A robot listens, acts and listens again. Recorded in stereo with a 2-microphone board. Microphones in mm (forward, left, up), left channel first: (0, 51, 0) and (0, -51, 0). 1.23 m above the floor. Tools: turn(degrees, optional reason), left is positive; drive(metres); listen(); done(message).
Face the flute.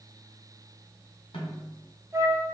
turn(degrees=-25, reason="The flute: about 25° right or 155° right.")
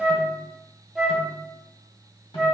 done("Found it: a flute, straight ahead.")